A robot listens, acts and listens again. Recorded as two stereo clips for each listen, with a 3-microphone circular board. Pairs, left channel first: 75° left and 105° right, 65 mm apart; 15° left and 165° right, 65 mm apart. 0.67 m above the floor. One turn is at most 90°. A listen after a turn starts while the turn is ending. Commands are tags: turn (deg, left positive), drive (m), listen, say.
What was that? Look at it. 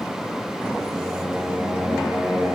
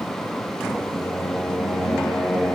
<turn deg="-50"/>
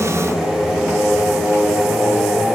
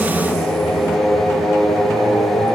<say>Found it: singing, straight ahead, over 4 m away.</say>